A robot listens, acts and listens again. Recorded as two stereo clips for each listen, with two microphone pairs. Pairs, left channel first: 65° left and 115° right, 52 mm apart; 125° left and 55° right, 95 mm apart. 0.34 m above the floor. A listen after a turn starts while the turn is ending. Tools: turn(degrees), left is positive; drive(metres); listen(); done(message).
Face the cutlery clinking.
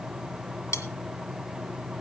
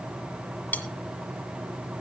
turn(degrees=55)
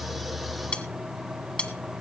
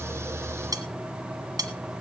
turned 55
done("Found it: cutlery clinking, straight ahead, 1 to 2 m away.")